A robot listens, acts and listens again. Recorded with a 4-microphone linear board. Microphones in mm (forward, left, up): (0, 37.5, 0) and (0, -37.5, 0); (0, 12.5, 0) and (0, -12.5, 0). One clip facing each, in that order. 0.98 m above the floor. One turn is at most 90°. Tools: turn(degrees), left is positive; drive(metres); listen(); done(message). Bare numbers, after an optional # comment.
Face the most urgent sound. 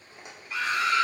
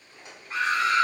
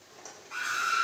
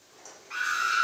# The scream: about 40° right or 140° right.
turn(-40)
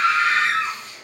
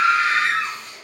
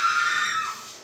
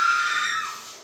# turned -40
done("Facing the scream.")